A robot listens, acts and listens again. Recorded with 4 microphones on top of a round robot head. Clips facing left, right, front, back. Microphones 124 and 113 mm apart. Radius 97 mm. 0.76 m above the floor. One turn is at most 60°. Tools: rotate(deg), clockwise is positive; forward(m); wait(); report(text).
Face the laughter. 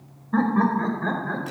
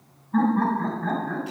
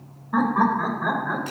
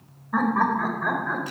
rotate(-60)
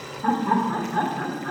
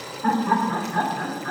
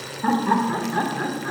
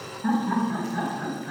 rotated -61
report("Facing the laughter.")